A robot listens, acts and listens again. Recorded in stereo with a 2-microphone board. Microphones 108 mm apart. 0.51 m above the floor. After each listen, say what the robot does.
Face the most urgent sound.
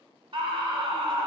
Turn 55° right.
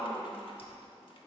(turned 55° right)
Turn 15° right.
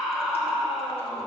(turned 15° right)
Facing the scream.